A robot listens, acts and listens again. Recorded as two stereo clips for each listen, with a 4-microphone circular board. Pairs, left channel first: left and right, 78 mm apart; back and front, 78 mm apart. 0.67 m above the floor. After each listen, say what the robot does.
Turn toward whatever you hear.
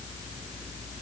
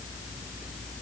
Keep listening.
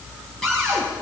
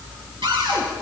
Facing the cupboard door.